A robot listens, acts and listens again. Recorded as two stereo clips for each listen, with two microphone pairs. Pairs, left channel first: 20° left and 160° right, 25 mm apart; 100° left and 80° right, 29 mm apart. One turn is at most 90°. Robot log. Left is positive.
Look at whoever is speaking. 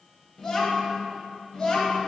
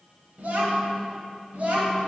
note: The child speaking: 50° right.
cmd yaw -50
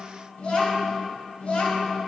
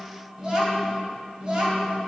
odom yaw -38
note: The child speaking is now 15° right.
cmd yaw -15
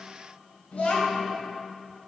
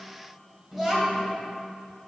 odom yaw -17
end: Found it: a child speaking, straight ahead, 2 to 4 m away.